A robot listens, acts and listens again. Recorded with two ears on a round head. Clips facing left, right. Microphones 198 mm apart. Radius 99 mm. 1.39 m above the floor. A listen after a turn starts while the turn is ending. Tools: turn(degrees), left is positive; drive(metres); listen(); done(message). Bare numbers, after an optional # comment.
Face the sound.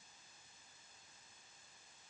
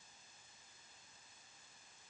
listen()
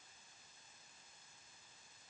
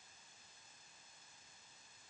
listen()
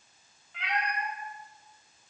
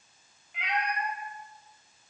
# The cat meowing: about 15° right or 165° right.
turn(-15)
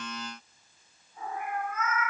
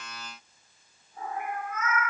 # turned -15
# The cat meowing: about 40° right or 140° right.
turn(-40)
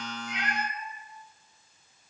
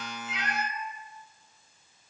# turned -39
# So it is at 110° right.
turn(-110)
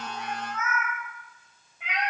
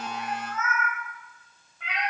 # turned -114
# The cat meowing is now 15° left.
turn(15)
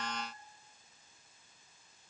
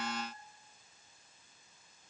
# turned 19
listen()
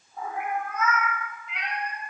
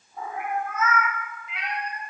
done("Found it: a cat meowing, straight ahead.")